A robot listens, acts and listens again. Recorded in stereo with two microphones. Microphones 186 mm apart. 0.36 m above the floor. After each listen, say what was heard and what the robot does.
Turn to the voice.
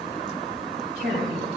The woman speaking: about 60° right or 120° right. Turn 60° right.
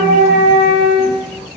Keep listening.
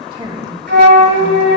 So it is at 30° right. Turn 30° right.
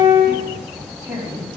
The woman speaking is now 20° right. Turn 20° right.
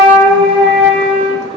Keep listening.
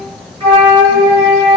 Keep listening.
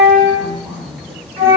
Found it: a woman speaking, straight ahead, 2 to 4 m away.